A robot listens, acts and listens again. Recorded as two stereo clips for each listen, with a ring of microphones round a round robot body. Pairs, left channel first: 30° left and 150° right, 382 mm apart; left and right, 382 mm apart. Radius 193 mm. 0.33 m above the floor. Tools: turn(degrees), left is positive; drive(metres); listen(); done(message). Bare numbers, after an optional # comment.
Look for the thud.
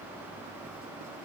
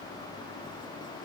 listen()
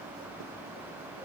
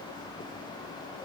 listen()
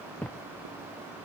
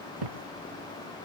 # The thud: 55° right.
turn(-55)
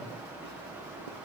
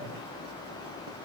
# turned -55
done("Facing where the thud came from. I can't hear it now.")